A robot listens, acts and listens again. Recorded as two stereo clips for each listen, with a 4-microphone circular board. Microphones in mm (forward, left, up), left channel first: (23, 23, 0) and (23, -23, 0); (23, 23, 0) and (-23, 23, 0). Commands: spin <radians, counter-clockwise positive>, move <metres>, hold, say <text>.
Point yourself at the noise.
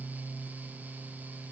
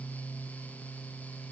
hold
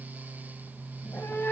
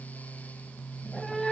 spin 1.31
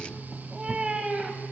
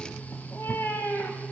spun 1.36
spin -0.44
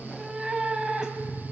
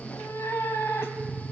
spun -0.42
spin -0.35
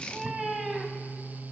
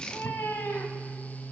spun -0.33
say Facing the cat meowing.